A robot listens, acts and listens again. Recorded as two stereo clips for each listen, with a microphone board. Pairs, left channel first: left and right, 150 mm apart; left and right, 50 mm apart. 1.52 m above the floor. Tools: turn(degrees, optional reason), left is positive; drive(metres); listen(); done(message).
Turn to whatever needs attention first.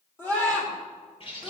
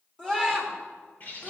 turn(degrees=15, reason="The scream: about 15° left or 165° left.")
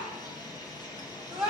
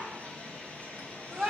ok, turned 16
done("Facing the scream, over 4 m away.")